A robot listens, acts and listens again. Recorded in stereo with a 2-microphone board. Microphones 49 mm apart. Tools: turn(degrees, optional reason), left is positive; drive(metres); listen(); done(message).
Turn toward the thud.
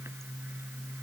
listen()
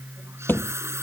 turn(degrees=45, reason="The thud: about 45° left or 135° left.")
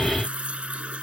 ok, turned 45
listen()
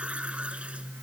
done("I heard a thud, but can't make it out now. It was about straight ahead or 90° left.")